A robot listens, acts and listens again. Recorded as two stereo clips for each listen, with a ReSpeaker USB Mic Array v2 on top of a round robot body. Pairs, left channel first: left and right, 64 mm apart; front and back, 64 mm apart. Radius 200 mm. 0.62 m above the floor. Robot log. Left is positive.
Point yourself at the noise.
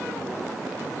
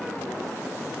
cmd idle
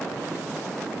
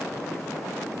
cmd idle
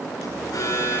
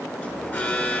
note: The alarm: 65° left.
cmd yaw +65
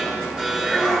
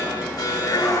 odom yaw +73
note: The alarm is now 10° right.
cmd yaw -10
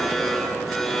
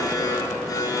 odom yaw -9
end: Found it: an alarm, straight ahead.